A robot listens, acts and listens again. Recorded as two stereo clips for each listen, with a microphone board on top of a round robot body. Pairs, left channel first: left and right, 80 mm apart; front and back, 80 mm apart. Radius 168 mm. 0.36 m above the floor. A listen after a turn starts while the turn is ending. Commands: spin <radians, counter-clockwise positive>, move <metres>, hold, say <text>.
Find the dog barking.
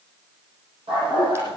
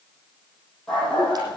spin -1.40
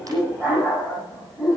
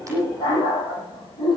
spin -0.17
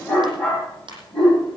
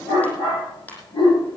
spin 0.17
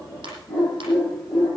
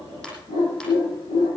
say Facing the dog barking.